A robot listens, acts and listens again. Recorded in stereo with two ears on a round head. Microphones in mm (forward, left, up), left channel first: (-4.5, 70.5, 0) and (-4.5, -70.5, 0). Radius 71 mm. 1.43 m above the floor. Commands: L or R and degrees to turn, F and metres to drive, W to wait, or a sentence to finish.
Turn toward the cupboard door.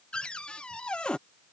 L30
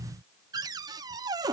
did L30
R25
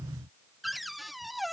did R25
Found it: a cupboard door, straight ahead.